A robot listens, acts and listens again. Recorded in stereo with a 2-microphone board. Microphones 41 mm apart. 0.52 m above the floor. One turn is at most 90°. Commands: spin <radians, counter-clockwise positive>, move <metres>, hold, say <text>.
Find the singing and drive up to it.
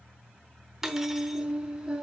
spin -0.35
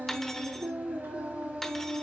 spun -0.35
spin -1.57
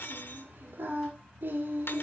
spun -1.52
spin -0.87
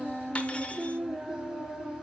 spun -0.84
move 1.0
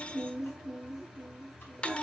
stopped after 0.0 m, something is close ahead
say Blocked. The singing is further on, straight ahead.